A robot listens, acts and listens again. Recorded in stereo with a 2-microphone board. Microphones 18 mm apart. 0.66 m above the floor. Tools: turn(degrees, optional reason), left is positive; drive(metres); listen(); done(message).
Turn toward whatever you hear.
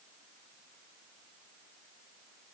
listen()
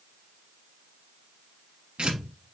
turn(degrees=-70, reason="The tearing paper: about 70° right or 110° right.")
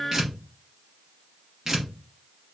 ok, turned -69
turn(degrees=-30, reason="So it is at 30° right.")
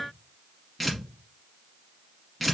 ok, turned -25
done("Found it: tearing paper, straight ahead, 1 to 2 m away.")